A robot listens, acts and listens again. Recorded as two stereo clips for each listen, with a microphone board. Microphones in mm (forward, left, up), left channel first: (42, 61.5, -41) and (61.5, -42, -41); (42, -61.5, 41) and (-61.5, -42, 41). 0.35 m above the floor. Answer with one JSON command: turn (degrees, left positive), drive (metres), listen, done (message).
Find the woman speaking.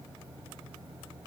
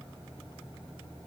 {"listen": true}
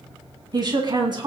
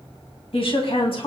{"turn": -40}
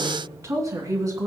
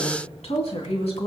{"turn": -25}
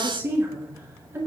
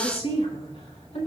{"turn": -15}
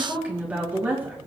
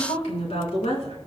{"done": "Facing the woman speaking."}